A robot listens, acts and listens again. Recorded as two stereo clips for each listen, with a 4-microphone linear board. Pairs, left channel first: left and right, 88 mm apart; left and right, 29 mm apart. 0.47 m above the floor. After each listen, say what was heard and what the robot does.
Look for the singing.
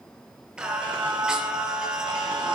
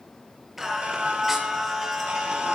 Turn 30° right.
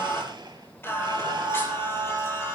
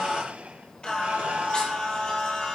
So it is at 30° left. Turn 30° left.
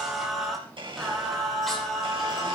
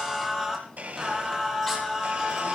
Facing the singing.